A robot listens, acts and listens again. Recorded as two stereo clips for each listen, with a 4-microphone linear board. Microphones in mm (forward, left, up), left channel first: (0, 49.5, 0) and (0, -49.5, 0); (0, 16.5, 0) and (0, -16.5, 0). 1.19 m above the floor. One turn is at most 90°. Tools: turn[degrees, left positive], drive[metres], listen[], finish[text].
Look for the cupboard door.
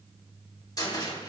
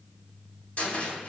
Thought: The cupboard door: about 40° left or 140° left.
Action: turn[40]
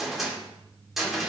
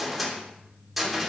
Action: finish[Found it: a cupboard door, straight ahead.]